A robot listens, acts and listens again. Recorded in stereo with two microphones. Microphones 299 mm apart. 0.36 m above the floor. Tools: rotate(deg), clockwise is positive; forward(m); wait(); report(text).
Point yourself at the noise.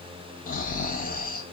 rotate(-30)
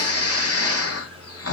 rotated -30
rotate(-115)
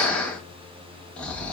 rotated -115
report("Facing the snoring, 1 to 2 m away.")